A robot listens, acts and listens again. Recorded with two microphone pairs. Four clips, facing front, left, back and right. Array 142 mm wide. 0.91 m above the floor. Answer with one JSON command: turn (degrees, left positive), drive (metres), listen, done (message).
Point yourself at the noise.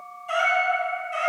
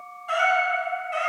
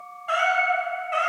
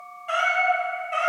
{"turn": -165}
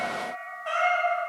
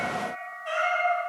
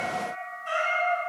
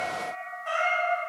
{"turn": -15}
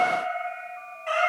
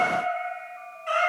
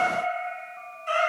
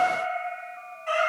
{"done": "Found it: a cat meowing, straight ahead, 2 to 4 m away."}